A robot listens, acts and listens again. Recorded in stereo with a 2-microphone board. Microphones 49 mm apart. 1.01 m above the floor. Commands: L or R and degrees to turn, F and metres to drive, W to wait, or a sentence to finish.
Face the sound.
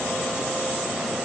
W
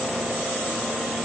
W
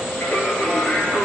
L25
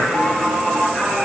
R10
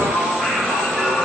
Found it: singing, straight ahead, 2 to 4 m away.